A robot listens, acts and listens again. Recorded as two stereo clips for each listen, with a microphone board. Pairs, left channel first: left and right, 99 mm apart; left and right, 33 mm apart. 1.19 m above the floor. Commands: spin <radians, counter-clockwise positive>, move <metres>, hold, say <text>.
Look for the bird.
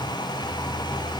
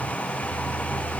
hold
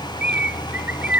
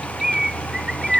spin -0.52
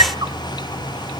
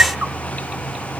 hold
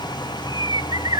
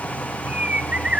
spin -2.36
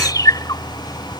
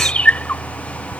spin 0.70
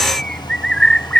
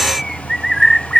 say Facing the bird.